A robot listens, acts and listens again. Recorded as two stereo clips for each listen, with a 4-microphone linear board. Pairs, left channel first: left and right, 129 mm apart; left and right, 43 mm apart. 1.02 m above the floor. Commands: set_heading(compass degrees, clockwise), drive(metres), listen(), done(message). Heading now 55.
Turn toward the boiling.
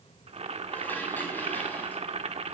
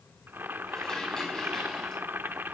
set_heading(110)
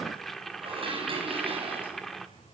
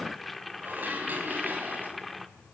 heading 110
done("Found it: boiling, straight ahead.")